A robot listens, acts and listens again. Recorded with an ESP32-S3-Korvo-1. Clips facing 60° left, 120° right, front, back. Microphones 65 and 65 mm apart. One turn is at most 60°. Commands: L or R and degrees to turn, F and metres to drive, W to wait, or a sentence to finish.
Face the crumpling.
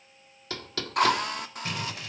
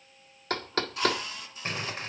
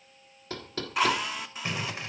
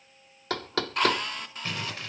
R60
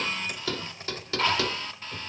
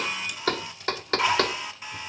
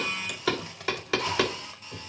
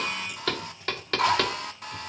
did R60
R10
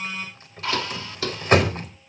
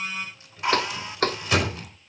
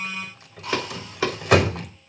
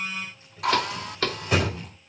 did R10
L15
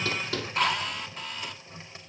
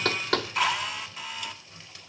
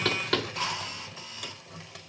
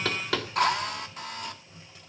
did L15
W
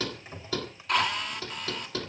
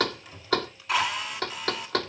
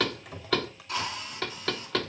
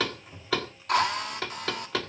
W
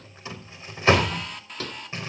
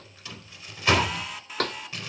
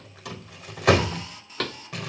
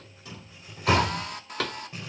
Facing the crumpling, over 4 m away.